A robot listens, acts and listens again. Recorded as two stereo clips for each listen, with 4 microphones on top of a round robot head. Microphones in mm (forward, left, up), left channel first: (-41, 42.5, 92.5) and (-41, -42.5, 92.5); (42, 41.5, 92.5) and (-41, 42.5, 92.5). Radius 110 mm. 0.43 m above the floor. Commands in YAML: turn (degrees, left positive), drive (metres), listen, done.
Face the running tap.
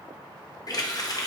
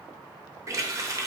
turn: 130
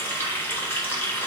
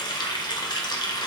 turn: 25
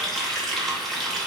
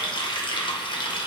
done: "Found it: a running tap, straight ahead, 1 to 2 m away."